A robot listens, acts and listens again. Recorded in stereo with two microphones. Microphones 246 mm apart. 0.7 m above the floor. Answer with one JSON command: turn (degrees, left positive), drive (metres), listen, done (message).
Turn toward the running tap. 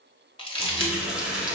{"turn": -30}
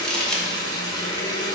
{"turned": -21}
{"turn": 15}
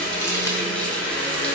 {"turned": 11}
{"done": "Facing the running tap."}